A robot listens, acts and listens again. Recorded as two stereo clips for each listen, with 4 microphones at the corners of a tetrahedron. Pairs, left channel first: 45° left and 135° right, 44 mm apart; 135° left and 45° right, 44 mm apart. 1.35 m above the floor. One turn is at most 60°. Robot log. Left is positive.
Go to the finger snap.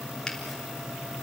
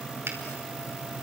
note: The finger snap: 30° right.
cmd yaw -30
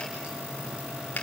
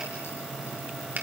cmd fwd 1.0
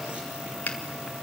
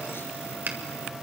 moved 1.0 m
cmd fwd 1.0
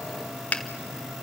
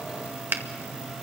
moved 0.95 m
note: The finger snap is now 10° right.
cmd yaw -10
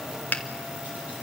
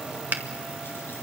cmd fwd 1.0
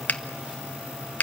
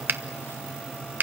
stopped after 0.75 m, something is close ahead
end: I am next to the finger snap.